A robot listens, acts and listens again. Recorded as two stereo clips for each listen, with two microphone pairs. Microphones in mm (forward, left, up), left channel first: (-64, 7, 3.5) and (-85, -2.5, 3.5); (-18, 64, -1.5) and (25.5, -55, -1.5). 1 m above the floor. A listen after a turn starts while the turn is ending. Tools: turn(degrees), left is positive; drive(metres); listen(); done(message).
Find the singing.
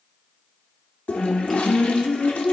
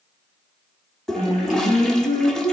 turn(degrees=75)
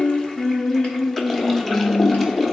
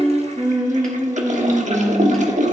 turn(degrees=-10)
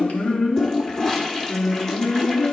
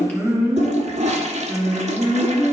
done("Found it: singing, straight ahead.")